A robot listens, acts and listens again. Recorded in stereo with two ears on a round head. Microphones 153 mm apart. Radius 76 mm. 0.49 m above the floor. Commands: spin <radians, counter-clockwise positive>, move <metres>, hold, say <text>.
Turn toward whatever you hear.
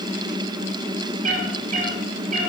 spin -0.79
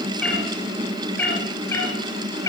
spin 0.35
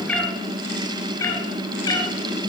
spin 0.44
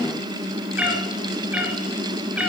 say Found it: a cat meowing, straight ahead, 2 to 4 m away.